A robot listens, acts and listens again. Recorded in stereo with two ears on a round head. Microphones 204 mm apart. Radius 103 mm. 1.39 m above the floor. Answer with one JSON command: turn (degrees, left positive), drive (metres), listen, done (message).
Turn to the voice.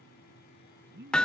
{"turn": -50}
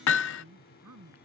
{"turn": -80}
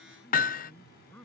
{"done": "Facing the man speaking."}